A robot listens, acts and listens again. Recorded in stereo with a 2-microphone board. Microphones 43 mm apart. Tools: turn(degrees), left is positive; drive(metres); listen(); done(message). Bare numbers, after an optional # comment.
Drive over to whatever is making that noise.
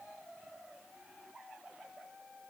listen()
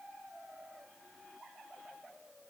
listen()
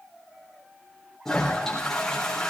turn(30)
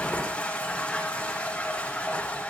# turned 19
# So it is at 155° left.
turn(155)
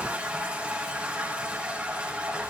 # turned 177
# The toilet flushing is now 20° right.
turn(-20)
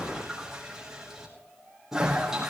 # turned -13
# The toilet flushing is now 10° right.
turn(-10)
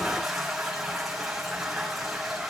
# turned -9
drive(1.0)
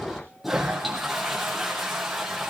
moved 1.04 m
drive(1.0)
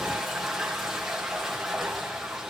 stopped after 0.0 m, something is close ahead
done("Something is in my way. I am facing the toilet flushing but have not reached it.")